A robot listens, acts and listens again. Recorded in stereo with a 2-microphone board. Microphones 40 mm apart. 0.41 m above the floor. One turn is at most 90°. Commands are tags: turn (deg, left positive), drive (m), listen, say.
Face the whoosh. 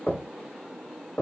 <listen/>
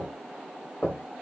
<listen/>
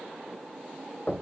<say>I can't make out a whoosh, only knocking.</say>